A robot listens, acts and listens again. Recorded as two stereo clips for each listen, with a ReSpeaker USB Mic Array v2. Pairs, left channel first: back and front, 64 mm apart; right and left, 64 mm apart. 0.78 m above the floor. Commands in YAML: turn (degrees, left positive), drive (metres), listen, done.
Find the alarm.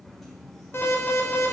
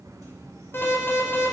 turn: -135
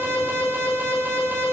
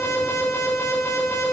turn: -45
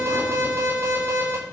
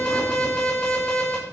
turn: -15
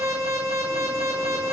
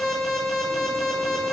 done: "Facing the alarm, over 4 m away."